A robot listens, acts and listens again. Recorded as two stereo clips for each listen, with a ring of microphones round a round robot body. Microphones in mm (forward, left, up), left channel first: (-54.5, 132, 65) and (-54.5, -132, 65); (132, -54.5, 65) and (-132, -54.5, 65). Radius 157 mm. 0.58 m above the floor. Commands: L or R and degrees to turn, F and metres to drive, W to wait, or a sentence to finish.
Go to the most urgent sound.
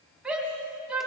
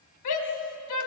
F1.0
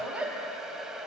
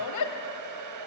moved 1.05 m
F1.0
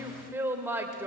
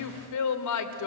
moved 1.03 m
R10
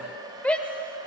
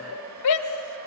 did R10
F1.0
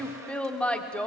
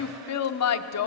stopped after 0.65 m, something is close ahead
I am next to the shout.